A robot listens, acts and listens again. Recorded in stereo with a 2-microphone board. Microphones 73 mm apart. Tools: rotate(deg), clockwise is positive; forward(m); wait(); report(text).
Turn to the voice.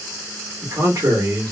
rotate(60)
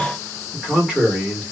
rotate(15)
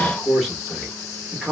report("Found it: a man speaking, straight ahead, 1 to 2 m away.")